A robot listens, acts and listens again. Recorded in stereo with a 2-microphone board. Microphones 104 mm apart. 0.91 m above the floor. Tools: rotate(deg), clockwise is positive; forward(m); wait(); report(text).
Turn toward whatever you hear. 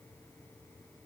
wait()
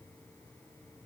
wait()
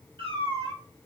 rotate(50)
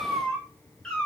rotate(-10)
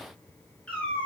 rotate(-15)
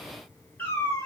rotate(-25)
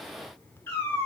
rotate(-20)
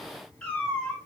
rotate(-10)
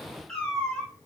report("Facing the cat meowing.")